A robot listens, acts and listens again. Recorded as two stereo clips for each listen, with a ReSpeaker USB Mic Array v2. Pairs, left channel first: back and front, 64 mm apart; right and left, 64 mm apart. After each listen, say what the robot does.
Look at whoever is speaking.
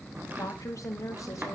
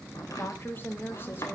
Turn 150° right.
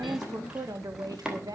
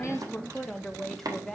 Turn 10° right.
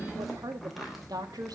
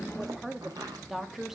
Found it: a woman speaking, straight ahead, 2 to 4 m away.